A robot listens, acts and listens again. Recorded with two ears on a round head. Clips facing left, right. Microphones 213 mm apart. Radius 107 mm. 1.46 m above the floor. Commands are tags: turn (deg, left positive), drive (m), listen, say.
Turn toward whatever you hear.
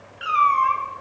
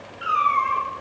<turn deg="55"/>
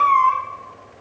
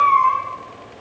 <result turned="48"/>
<turn deg="25"/>
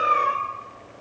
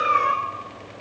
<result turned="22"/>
<say>Facing the cat meowing.</say>